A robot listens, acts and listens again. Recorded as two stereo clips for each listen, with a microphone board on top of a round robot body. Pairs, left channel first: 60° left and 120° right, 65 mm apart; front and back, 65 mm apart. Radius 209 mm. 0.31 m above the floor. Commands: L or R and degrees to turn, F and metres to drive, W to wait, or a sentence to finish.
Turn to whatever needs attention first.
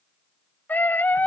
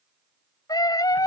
Facing the scream.